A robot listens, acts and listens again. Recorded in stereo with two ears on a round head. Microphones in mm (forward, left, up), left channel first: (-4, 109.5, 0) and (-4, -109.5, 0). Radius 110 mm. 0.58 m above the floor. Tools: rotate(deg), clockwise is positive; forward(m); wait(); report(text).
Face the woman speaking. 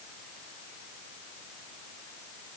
wait()
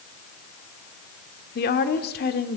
rotate(-40)
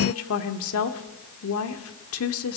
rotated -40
rotate(-95)
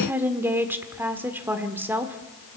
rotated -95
rotate(10)
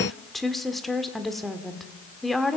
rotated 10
report("Facing the woman speaking, 1 to 2 m away.")